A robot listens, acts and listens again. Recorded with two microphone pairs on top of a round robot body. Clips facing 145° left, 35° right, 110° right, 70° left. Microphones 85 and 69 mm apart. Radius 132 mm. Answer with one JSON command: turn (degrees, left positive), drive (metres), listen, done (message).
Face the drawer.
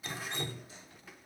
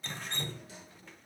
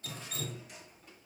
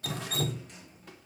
{"turn": -25}
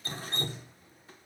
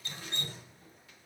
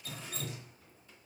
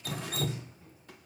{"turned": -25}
{"listen": true}
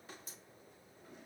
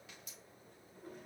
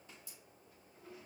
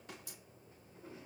{"done": "Found it: a drawer, straight ahead, 2 to 4 m away."}